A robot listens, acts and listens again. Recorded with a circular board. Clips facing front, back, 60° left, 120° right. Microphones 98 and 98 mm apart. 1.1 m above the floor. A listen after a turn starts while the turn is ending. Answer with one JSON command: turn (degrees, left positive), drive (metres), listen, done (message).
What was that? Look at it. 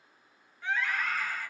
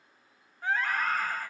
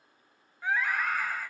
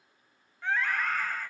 {"turn": 140}
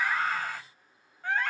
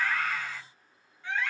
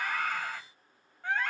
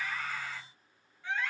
{"turn": 35}
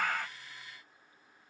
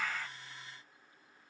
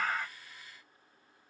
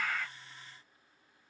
{"listen": true}
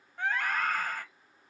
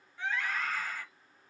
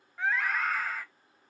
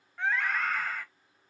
{"turn": -25}
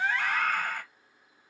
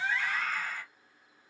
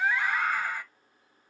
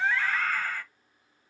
{"turn": -10}
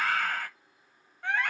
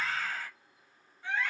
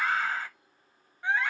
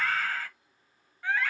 {"done": "Facing the scream, 1 to 2 m away."}